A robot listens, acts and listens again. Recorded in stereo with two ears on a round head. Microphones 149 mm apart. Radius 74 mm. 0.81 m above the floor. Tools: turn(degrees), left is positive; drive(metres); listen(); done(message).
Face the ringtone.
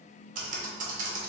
listen()
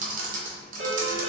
turn(degrees=-90)
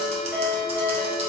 done("Facing the ringtone, 1 to 2 m away.")